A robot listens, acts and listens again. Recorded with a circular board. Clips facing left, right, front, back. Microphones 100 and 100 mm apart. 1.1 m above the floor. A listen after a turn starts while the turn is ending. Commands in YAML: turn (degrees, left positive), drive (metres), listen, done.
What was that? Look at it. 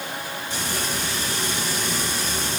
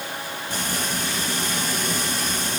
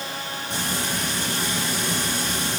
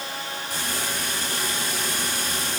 turn: -60
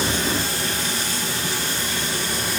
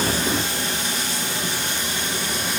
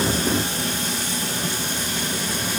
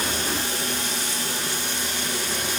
turn: -25
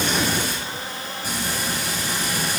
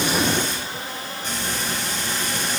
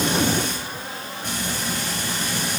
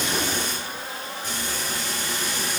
turn: 10
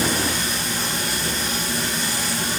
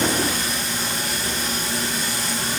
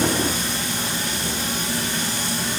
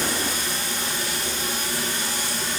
done: "Facing the frying, over 4 m away."